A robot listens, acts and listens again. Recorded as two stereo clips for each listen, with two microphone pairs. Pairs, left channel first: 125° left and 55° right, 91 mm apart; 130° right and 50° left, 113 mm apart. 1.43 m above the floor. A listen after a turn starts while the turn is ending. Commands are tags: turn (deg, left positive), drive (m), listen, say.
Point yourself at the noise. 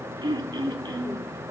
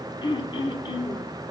<turn deg="-85"/>
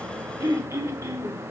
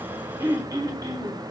<say>Found it: throat clearing, straight ahead, under 1 m away.</say>